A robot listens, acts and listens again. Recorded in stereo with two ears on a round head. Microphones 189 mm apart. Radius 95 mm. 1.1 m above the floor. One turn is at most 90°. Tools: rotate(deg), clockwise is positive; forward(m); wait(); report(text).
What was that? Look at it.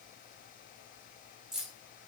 rotate(-30)
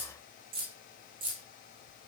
rotate(25)
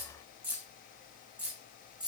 report("Facing the keys jangling, 2 to 4 m away.")